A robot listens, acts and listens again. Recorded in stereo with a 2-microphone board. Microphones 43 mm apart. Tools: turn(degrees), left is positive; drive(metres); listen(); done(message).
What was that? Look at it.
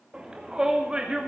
turn(degrees=-20)
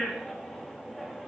done("Found it: a shout, straight ahead, 2 to 4 m away.")